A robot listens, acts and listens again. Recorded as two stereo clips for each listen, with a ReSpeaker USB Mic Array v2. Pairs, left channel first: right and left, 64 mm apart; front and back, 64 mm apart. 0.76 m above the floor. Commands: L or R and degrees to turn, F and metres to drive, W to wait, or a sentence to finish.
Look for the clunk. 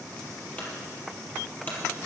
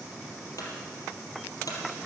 R25
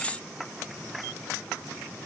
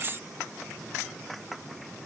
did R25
Facing where the clunk came from. I can't hear it now.